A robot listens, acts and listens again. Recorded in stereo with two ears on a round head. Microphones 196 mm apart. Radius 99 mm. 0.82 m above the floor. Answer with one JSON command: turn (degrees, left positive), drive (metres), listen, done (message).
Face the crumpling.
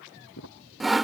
{"turn": 90}
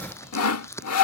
{"turn": 10}
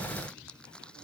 {"done": "Facing the crumpling."}